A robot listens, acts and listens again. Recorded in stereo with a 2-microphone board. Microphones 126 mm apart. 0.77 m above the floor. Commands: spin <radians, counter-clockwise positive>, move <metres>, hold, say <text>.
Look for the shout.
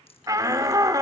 spin -0.44
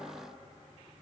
hold
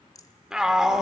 say Facing the shout, 1 to 2 m away.